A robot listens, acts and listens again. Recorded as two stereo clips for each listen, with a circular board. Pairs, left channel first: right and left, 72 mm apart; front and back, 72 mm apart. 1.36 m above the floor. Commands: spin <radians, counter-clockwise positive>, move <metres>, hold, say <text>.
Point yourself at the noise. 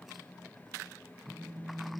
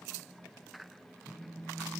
spin 0.79
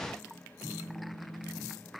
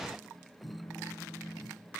say Facing the phone buzzing.